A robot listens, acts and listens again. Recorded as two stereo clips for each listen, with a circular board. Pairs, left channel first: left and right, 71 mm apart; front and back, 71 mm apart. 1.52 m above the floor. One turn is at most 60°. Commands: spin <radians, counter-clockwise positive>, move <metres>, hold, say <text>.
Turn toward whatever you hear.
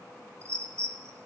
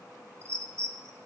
spin -1.05
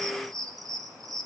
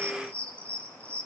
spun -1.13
spin -1.05
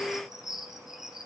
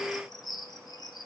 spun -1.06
say Facing the bird.